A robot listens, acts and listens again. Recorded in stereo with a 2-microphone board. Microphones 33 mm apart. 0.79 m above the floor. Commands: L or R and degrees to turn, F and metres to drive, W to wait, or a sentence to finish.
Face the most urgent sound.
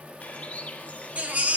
R45
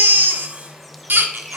R85
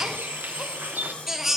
R10
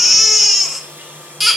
Facing the baby crying, 1 to 2 m away.